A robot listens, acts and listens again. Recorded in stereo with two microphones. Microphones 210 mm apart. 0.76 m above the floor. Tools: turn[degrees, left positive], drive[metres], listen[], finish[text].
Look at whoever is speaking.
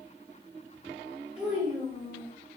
Action: turn[-30]
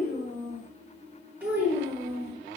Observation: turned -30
Action: turn[-30]
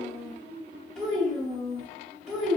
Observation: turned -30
Action: turn[-30]
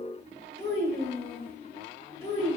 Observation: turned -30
Thought: So it is at 25° left.
Action: turn[25]
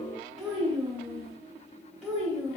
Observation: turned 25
Thought: The child speaking is now 10° right.
Action: turn[-10]
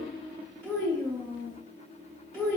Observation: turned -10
Action: finish[Facing the child speaking, 1 to 2 m away.]